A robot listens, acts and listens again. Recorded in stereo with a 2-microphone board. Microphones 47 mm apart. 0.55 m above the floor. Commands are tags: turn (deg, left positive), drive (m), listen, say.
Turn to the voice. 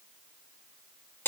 <listen/>
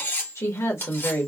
<turn deg="65"/>
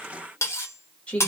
<turn deg="25"/>
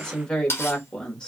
<turn deg="15"/>
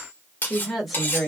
<say>Found it: a woman speaking, straight ahead.</say>